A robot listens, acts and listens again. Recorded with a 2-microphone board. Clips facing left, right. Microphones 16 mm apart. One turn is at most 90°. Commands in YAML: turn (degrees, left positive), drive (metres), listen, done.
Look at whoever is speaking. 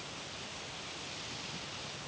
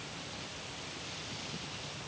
listen: true
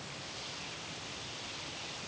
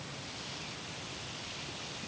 listen: true
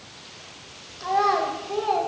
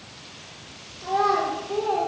turn: 45
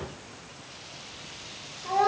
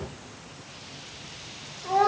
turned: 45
done: "Facing the child speaking, 1 to 2 m away."